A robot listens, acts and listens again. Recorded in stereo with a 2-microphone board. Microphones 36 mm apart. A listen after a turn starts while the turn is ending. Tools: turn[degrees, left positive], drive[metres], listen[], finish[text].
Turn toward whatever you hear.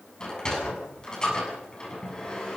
Thought: The sliding door: about 20° left or 160° left.
Action: turn[20]
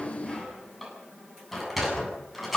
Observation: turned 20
Action: finish[Found it: a sliding door, straight ahead.]